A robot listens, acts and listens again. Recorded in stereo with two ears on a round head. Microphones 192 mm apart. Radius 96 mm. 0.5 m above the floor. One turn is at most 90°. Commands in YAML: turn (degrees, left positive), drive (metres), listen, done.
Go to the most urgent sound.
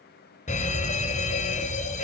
turn: 35
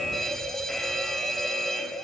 drive: 1.0
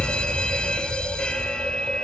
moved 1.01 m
drive: 1.0
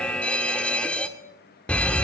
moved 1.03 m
turn: 10
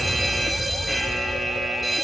drive: 1.0
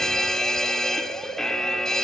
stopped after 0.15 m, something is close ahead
done: "I am next to the fire alarm."